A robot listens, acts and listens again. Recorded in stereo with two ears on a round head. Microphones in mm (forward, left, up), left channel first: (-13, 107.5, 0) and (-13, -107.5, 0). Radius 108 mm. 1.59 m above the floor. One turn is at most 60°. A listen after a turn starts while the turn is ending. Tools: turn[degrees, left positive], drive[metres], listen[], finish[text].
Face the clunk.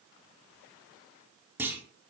Action: turn[-30]
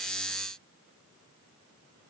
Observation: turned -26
Action: listen[]
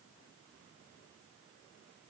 Action: finish[I heard a clunk, but can't make it out now. It was about 15° left or 145° right.]